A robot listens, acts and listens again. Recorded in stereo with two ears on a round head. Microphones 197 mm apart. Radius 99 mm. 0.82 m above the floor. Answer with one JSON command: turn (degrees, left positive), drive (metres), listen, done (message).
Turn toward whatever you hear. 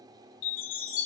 {"turn": 60}
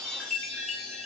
{"done": "Found it: a chime, straight ahead."}